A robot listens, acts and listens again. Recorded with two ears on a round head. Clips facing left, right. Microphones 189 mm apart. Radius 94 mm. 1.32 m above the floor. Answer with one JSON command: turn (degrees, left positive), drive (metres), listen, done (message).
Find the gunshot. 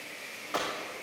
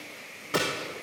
{"turn": -35}
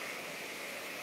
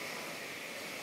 {"listen": true}
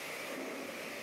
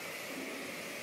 {"done": "I heard a gunshot, but can't make it out now. It was about straight ahead or 110° right."}